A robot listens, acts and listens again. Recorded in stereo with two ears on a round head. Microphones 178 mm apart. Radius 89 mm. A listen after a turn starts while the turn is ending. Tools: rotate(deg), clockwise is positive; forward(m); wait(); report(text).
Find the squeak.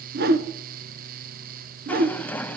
rotate(-30)
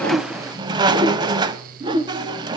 rotate(20)
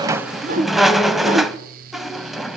report("Facing the squeak.")